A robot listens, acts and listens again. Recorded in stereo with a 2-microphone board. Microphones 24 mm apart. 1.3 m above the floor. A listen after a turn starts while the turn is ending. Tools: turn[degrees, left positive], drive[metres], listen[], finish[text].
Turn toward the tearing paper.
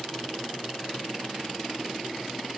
Action: listen[]
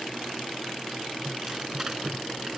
Thought: The tearing paper: about 20° right or 160° right.
Action: turn[-20]
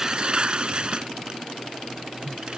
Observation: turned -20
Thought: So it is at 140° right.
Action: turn[-140]
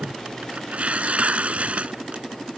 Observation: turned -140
Thought: The tearing paper is now 55° right.
Action: turn[-55]
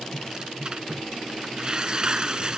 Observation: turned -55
Thought: The tearing paper is now 30° right.
Action: turn[-30]
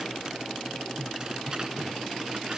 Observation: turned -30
Action: listen[]
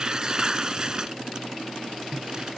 Thought: The tearing paper is now 25° right.
Action: turn[-25]
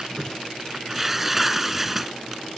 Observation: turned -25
Thought: The tearing paper is now 10° right.
Action: turn[-10]
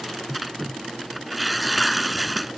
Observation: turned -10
Action: finish[Facing the tearing paper.]